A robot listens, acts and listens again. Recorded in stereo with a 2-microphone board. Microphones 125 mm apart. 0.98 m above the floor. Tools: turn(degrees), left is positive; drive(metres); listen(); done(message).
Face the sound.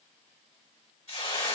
turn(degrees=50)
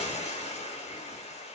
turn(degrees=70)
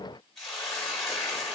done("Facing the hiss, 1 to 2 m away.")